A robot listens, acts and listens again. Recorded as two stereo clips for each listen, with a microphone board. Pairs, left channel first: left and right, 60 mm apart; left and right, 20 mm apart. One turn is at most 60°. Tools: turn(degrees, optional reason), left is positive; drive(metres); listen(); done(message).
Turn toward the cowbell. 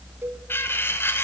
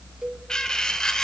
turn(degrees=-40, reason="The cowbell: about 40° right or 140° right.")
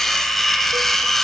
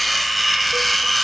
listen()
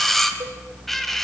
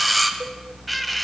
listen()
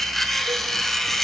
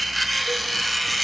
done("I heard a cowbell, but can't make it out now. It was about straight ahead or 100° right.")